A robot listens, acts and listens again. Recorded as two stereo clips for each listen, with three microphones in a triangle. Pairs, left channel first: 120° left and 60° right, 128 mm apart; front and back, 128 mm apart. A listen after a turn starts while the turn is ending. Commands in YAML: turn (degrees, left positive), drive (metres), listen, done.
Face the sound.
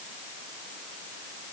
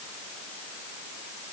listen: true
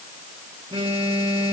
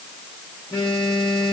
turn: -30
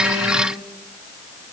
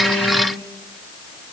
listen: true
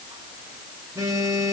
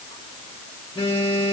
done: "Found it: a phone buzzing, straight ahead."